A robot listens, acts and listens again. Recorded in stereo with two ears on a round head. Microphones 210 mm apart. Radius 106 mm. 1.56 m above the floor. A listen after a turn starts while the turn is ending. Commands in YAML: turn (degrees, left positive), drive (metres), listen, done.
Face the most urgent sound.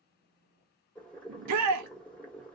turn: -90
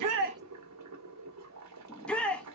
done: "Found it: a shout, straight ahead."